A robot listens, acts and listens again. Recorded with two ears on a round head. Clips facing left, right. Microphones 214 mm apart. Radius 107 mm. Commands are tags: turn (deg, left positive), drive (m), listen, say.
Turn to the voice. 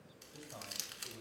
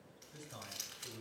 <turn deg="-15"/>
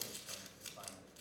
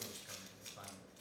<listen/>
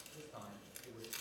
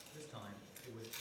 <turn deg="-150"/>
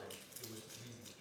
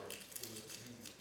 <turn deg="15"/>
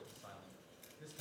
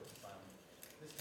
<say>Facing the man speaking.</say>